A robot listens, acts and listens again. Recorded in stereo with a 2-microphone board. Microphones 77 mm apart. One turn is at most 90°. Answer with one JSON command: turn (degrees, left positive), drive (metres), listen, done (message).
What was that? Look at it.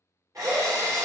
{"turn": -50}
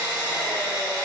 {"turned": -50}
{"turn": -80}
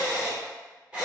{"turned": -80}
{"turn": -15}
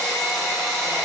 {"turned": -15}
{"done": "Facing the drill."}